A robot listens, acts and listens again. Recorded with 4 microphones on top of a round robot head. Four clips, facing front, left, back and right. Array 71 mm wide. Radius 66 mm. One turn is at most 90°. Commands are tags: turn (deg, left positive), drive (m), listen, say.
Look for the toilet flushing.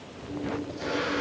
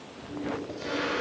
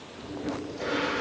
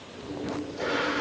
<turn deg="-90"/>
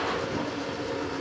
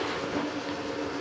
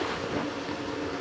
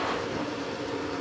<say>Found it: a toilet flushing, straight ahead, over 4 m away.</say>